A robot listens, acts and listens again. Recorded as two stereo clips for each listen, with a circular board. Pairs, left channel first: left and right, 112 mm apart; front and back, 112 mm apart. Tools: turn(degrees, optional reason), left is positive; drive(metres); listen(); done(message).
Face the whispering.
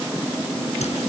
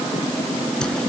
listen()
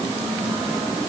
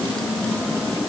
listen()
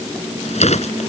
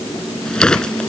done("I can't make out whispering, only a whoosh.")